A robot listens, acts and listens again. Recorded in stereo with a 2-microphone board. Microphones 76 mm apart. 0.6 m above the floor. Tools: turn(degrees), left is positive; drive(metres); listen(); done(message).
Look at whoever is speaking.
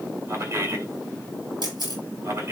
turn(degrees=-35)
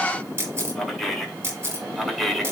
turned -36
done("Facing the man speaking, 1 to 2 m away.")